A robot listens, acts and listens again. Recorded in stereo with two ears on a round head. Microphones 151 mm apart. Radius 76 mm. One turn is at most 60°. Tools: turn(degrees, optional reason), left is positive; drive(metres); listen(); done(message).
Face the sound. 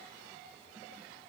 listen()
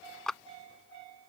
turn(degrees=30)
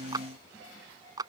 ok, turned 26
turn(degrees=-25, reason="So it is at 25° right.")
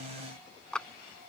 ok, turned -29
done("Found it: a clap, straight ahead.")